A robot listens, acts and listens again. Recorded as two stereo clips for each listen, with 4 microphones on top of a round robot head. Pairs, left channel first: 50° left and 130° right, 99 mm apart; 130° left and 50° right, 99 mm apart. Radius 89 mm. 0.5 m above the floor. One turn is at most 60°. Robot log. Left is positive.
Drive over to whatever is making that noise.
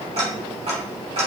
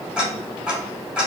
note: The ticking: 130° right.
cmd yaw -60
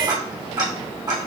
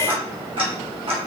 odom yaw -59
note: The ticking is now 75° right.
cmd yaw -60
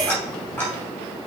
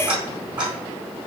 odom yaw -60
note: The ticking is now 15° right.
cmd yaw -15
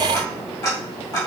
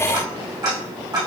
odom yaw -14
cmd fwd 1.0
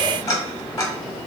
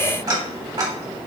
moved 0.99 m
cmd fwd 1.0
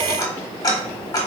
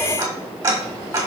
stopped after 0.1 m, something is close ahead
end: Arrived at the ticking, straight ahead.